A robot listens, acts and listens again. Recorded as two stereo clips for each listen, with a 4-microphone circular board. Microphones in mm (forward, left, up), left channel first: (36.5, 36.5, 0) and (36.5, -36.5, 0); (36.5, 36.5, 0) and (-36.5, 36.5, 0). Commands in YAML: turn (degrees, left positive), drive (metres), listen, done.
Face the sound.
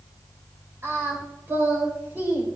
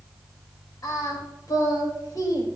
turn: -25
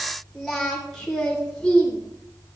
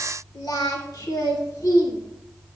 turn: 15
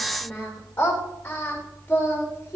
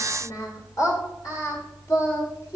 turn: 30
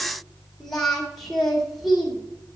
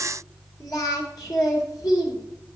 done: "Found it: singing, straight ahead."